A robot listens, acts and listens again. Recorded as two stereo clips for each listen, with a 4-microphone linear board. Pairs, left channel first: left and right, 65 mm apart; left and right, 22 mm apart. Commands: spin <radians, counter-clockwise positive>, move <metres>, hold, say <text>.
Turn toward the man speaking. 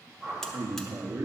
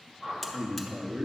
spin -1.13
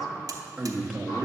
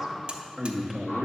say Facing the man speaking, under 1 m away.